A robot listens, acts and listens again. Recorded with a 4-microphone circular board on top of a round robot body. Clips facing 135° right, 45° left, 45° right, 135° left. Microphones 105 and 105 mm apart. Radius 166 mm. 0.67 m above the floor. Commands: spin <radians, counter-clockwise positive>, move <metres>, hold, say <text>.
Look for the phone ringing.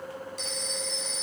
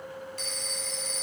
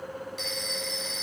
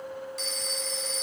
spin 1.48
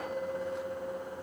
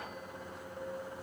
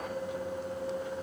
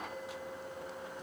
hold
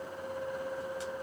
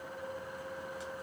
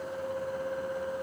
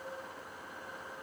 hold
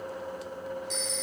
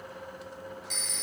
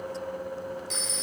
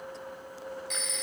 spin 0.17
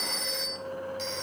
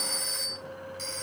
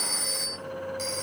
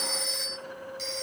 say Found it: a phone ringing, straight ahead, 1 to 2 m away.